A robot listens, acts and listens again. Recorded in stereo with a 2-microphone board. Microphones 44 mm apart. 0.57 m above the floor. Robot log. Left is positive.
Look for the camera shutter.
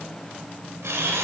cmd yaw -90
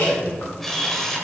end: Facing the camera shutter.